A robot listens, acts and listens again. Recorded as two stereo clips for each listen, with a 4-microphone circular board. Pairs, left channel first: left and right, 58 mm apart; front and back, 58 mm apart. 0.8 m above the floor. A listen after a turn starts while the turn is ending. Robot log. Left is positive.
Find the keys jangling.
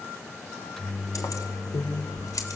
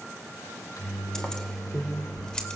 note: The keys jangling: 75° left.
cmd yaw +75
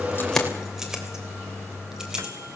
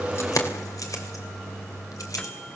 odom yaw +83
note: The keys jangling is now 10° right.
cmd yaw -10
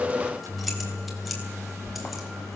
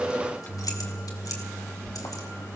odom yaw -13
end: Found it: keys jangling, straight ahead.